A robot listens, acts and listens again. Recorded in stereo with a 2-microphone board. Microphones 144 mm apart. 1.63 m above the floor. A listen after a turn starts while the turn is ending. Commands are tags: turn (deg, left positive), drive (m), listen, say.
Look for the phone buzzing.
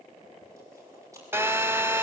<turn deg="-15"/>
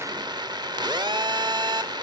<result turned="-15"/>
<turn deg="-150"/>
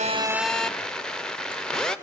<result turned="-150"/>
<say>Found it: a phone buzzing, straight ahead, under 1 m away.</say>